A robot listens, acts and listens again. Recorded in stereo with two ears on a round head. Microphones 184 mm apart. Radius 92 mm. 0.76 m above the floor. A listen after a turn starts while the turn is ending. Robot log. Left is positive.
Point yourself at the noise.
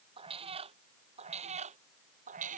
note: The cat meowing: about 40° right or 140° right.
cmd yaw -40
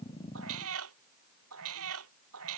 note: So it is at 105° right.
cmd yaw -105
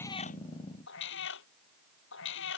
note: The cat meowing is now 65° left.
cmd yaw +65
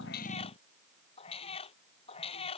note: The cat meowing is now 30° left.
cmd yaw +30
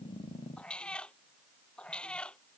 end: Facing the cat meowing.